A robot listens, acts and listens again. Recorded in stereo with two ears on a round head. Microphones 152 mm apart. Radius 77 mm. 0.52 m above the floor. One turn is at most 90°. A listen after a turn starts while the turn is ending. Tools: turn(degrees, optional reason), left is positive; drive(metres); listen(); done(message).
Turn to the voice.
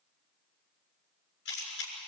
listen()
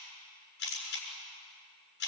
listen()
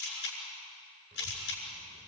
turn(degrees=-40, reason="The child speaking: about 40° right or 140° right.")
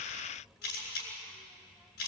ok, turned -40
done("Found it: a child speaking, straight ahead, 1 to 2 m away.")